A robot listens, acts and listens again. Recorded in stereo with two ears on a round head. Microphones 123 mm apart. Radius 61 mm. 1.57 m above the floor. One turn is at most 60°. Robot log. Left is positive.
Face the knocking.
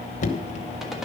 note: The knocking: about 55° left or 125° left.
cmd yaw +55
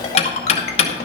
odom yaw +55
note: So it is at 55° left.
cmd yaw +55
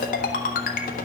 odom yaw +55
cmd idle
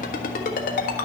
cmd idle
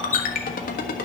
note: The knocking is now 15° left.
cmd yaw +15
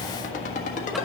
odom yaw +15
cmd idle
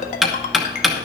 end: Found it: knocking, straight ahead, 1 to 2 m away.